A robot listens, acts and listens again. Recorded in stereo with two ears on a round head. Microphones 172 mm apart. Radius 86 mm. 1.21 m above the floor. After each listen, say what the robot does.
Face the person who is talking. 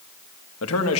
Turn 90° left.
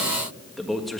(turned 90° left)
Facing the man speaking.